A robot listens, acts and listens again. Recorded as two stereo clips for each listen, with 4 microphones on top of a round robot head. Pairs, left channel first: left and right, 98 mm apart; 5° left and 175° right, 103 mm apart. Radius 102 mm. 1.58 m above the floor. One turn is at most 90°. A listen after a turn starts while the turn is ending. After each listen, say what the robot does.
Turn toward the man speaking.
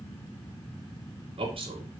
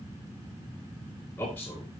Turn 70° right.
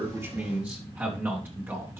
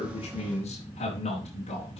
Turn 25° right.
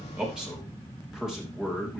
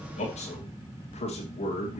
Turn 10° right.
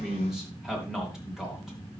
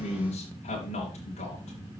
Facing the man speaking.